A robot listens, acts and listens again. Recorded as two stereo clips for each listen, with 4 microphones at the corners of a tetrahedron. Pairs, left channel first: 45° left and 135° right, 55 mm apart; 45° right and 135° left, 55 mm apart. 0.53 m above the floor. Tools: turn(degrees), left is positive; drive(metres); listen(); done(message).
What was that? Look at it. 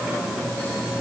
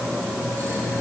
listen()
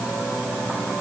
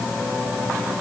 listen()
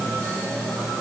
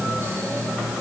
done("I can't make out anything to turn to.")